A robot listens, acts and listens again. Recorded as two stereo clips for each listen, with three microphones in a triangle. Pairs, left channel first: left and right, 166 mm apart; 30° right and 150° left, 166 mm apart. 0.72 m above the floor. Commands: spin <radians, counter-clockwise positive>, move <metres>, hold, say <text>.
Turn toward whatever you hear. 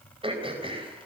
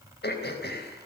spin -0.52
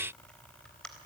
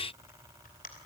say Found it: throat clearing, straight ahead.